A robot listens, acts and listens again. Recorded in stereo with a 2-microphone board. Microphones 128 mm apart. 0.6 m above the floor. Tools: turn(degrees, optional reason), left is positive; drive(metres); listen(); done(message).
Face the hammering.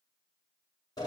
listen()
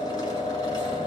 listen()
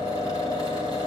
done("I can't make out hammering to turn to.")